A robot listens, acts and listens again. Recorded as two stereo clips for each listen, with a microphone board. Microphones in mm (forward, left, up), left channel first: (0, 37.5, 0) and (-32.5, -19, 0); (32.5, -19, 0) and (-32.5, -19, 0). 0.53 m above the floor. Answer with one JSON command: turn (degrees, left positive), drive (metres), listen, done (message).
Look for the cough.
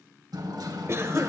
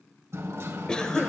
{"turn": -75}
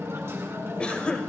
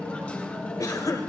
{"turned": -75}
{"turn": -15}
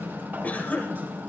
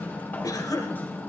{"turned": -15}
{"done": "Found it: a cough, straight ahead."}